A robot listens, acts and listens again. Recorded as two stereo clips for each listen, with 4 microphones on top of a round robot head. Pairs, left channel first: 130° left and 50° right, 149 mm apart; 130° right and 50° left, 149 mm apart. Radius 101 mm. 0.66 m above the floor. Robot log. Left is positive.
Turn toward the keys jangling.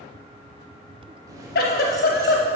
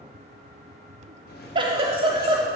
note: The keys jangling: 115° right.
cmd yaw -115
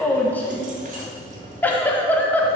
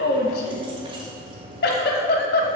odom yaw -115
note: The keys jangling is now 10° right.
cmd yaw -10
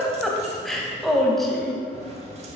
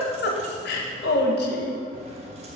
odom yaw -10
cmd idle
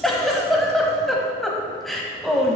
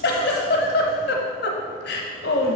cmd idle
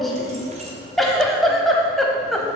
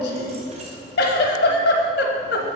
end: Facing where the keys jangling came from. I can't hear it now.